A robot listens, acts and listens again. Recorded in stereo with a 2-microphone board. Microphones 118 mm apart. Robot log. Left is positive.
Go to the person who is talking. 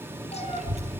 note: The child speaking: about 75° right or 105° right.
cmd yaw -75
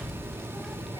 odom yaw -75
cmd fwd 1.0
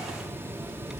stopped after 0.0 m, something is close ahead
end: Blocked. The child speaking is further on, straight ahead.